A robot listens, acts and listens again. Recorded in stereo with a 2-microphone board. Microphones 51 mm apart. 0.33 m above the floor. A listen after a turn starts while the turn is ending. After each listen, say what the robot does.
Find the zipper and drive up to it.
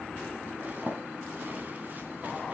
Turn 35° right.
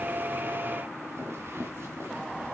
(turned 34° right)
Turn 105° right.
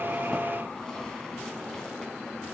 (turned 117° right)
Turn 10° left.
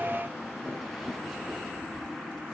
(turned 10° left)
Drive 1.0 m forward.
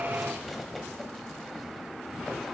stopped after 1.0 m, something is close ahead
Keep listening.
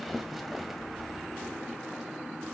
Arrived at the zipper, straight ahead.